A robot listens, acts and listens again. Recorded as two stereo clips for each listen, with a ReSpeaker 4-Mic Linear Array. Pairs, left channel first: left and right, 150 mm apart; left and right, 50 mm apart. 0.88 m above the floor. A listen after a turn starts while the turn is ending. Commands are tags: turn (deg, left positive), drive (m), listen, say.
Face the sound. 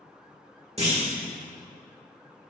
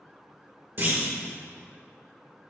<turn deg="-45"/>
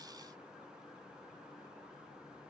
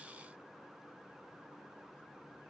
<listen/>
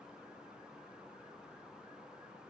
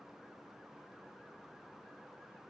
<say>I heard a clunk, but can't make it out now. It was about straight ahead or 90° right.</say>